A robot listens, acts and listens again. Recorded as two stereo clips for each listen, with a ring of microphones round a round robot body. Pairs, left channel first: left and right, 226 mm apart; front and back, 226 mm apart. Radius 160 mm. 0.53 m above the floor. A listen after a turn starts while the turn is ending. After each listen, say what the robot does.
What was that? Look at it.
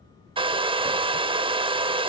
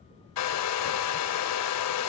Turn 20° right.
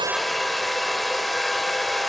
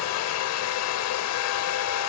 Facing the hair dryer, under 1 m away.